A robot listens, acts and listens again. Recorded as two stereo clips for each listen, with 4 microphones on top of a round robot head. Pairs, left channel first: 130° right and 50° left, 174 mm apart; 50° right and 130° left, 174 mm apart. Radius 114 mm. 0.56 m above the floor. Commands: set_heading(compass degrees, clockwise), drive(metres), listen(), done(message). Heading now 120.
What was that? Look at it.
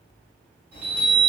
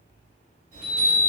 set_heading(35)
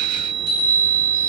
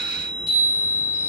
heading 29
set_heading(39)
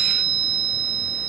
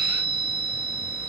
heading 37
done("Found it: a chime, straight ahead, 2 to 4 m away.")